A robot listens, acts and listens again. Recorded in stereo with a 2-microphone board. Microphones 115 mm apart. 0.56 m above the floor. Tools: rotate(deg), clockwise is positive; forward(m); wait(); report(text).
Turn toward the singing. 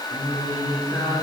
rotate(-35)
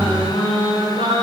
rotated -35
rotate(-115)
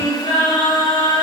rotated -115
rotate(-35)
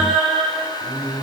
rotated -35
report("Facing the singing.")